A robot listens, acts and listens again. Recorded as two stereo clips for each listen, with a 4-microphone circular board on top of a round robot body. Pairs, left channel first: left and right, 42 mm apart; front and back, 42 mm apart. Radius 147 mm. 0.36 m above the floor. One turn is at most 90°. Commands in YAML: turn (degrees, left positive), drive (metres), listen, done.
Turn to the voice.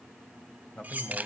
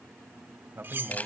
turn: 90
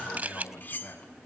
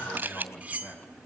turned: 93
turn: 50
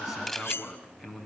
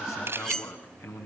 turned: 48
done: "Found it: a man speaking, straight ahead, over 4 m away."